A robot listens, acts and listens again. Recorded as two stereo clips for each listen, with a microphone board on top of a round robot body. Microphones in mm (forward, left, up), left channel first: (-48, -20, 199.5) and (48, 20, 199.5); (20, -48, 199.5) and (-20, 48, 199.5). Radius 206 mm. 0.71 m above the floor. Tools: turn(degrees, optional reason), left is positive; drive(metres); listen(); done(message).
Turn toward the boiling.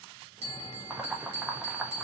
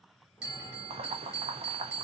turn(degrees=100, reason="The boiling: 100° left.")
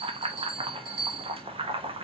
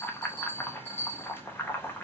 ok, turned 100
done("Facing the boiling.")